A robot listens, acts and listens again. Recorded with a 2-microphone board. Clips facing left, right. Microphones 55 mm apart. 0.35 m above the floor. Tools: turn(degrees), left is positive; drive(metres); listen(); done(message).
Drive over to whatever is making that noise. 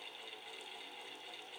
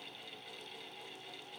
listen()
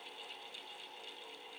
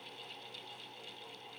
listen()
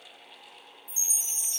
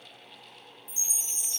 turn(degrees=-60)
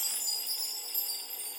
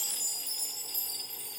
turn(degrees=-20)
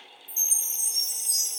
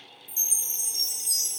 drive(metres=1.0)
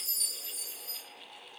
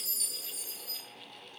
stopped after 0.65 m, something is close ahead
done("Arrived at the chime, straight ahead.")